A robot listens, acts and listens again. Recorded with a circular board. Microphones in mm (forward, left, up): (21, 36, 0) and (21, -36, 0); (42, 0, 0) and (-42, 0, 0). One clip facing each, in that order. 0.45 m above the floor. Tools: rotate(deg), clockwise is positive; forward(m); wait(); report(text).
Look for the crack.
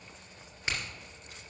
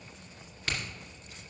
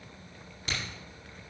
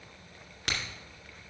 rotate(-160)
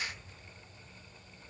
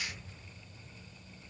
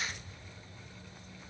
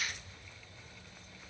report("Facing where the crack came from. I can't hear it now.")